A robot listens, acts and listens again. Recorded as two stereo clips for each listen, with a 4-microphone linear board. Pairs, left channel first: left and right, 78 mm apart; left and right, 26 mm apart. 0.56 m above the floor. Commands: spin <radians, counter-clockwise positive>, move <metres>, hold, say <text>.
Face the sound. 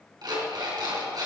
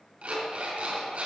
spin -1.05
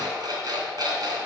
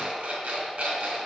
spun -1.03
spin -1.05
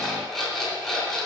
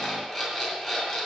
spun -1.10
say Found it: an alarm clock, straight ahead.